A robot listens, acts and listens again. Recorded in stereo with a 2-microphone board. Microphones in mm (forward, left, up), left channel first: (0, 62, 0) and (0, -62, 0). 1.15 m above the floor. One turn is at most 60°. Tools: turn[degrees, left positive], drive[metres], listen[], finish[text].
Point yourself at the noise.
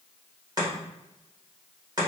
Thought: The chopping: about 30° right or 150° right.
Action: turn[-30]
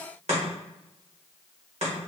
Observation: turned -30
Thought: So it is at 115° right.
Action: turn[-60]
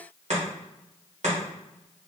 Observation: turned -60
Thought: The chopping is now 65° right.
Action: turn[-60]
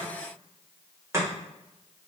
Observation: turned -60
Thought: The chopping is now 25° right.
Action: turn[-25]
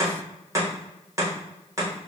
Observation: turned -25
Thought: The chopping is now 25° right.
Action: turn[-25]
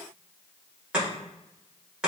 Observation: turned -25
Thought: The chopping is now 10° right.
Action: turn[-10]
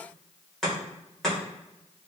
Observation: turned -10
Action: finish[Facing the chopping, 1 to 2 m away.]